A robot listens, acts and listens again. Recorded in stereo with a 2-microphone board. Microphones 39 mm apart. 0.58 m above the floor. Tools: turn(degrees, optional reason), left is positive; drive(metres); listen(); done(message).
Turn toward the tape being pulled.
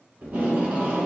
turn(degrees=-40, reason="The tape being pulled: about 40° right or 140° right.")
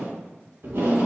turn(degrees=-100, reason="So it is at 100° right.")
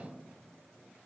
listen()
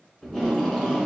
turn(degrees=15, reason="The tape being pulled is now 15° left.")
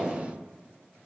done("Found it: tape being pulled, straight ahead.")